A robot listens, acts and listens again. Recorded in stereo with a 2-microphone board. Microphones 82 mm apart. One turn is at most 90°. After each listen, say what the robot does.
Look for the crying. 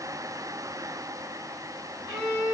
Keep listening.
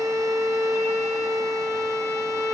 Keep listening.
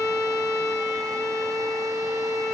I can't make out crying to turn to.